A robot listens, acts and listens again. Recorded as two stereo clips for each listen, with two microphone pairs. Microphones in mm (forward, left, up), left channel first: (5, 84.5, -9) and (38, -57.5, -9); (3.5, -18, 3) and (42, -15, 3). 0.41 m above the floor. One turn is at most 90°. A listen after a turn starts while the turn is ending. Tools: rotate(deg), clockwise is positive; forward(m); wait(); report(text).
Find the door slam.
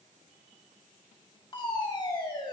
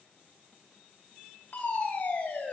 wait()
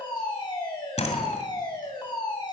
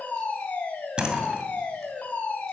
rotate(-70)
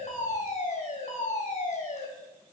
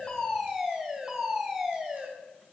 report("I heard a door slam from this way, but can't make it out now.")